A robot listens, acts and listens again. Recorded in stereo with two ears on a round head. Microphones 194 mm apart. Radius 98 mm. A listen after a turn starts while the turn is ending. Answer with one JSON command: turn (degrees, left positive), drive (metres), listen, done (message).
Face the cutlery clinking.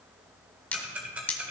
{"turn": 30}
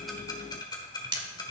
{"turn": -20}
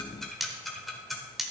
{"done": "Found it: cutlery clinking, straight ahead, under 1 m away."}